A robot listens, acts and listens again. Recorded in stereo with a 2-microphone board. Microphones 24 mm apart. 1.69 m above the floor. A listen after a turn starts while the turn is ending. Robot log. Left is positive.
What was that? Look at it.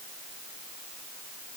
cmd idle
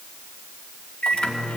note: The microwave: about 70° left or 110° left.
cmd yaw +70
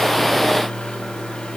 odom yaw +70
note: So it is at 30° left.
cmd yaw +30
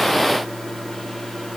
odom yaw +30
end: Facing the microwave, 2 to 4 m away.